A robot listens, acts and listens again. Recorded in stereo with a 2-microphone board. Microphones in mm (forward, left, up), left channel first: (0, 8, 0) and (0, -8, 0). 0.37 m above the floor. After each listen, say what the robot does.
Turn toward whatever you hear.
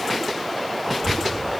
Turn 35° left.
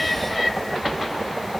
Found it: a child speaking, straight ahead, 1 to 2 m away.